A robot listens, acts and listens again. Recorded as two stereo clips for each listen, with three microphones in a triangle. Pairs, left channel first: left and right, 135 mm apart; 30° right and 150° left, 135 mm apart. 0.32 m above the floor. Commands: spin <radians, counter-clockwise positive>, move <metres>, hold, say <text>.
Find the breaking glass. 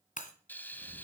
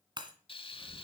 spin 1.75
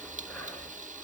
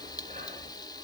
say Facing where the breaking glass came from. I can't hear it now.